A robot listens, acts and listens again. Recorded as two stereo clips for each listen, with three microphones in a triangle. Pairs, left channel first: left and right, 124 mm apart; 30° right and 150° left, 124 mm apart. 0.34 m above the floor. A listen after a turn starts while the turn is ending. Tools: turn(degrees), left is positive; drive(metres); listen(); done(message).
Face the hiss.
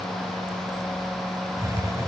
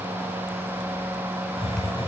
turn(degrees=-35)
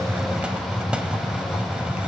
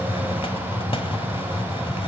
turn(degrees=-10)
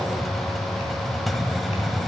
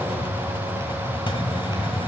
done("Found it: a hiss, straight ahead, 1 to 2 m away.")